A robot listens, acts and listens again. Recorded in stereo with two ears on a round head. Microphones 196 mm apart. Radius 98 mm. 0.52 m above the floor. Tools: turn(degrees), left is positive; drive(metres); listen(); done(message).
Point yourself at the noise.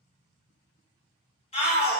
turn(degrees=30)
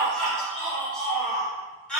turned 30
done("Facing the shout, 1 to 2 m away.")